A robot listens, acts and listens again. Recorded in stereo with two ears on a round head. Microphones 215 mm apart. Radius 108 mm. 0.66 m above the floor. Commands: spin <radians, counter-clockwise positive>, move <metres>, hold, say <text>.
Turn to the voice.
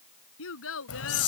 spin 1.05
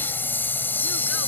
hold
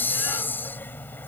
hold
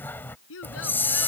spin 1.05
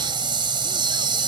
hold
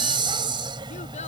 hold
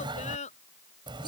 spin 0.52
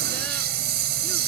hold
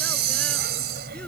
hold
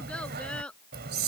say Found it: a child speaking, straight ahead.